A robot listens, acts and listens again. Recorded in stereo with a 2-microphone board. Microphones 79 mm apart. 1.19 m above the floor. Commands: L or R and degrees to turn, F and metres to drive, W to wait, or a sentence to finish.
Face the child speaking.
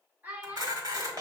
R20
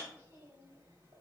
W
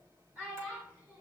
R15
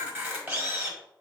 R25
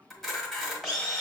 W
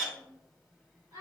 R135
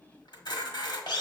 W
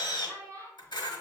R40
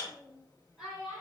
Facing the child speaking.